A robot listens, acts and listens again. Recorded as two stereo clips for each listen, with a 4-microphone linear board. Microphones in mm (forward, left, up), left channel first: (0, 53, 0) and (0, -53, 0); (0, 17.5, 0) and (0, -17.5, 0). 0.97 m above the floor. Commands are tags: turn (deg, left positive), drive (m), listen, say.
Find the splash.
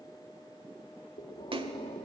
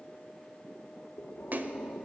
<turn deg="-55"/>
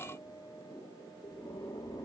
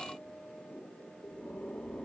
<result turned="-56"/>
<listen/>
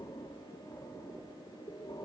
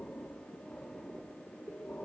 <say>I heard a splash, but can't make it out now. It was about straight ahead or 65° right.</say>